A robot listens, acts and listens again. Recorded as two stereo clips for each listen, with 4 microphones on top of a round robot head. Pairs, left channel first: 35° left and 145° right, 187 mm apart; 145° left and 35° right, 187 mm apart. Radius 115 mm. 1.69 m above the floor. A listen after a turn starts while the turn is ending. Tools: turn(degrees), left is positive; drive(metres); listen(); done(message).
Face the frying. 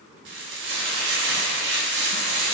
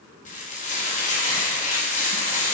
turn(degrees=-165)
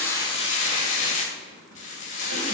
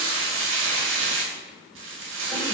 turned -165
turn(degrees=-15)
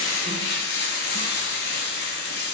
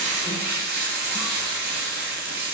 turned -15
done("Facing the frying.")